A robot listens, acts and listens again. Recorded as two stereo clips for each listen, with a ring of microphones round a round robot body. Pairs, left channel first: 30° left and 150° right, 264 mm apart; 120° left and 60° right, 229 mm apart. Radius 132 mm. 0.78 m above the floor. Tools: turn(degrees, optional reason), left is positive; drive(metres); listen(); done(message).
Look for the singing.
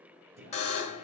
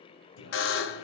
turn(degrees=145, reason="The singing: 145° left.")
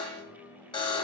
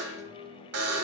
done("Found it: singing, straight ahead, 2 to 4 m away.")